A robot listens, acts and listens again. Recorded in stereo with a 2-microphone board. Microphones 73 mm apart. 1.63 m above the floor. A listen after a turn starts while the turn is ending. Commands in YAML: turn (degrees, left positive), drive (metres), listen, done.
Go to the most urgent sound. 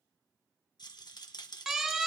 turn: -30
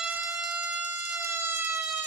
turn: -145
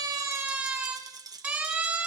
turn: -25
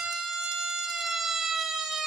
turn: -10
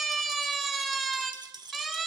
drive: 1.0
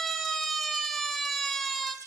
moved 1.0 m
drive: 1.0
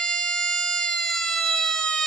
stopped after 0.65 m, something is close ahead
turn: 10
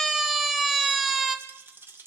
done: "Arrived at the siren, straight ahead."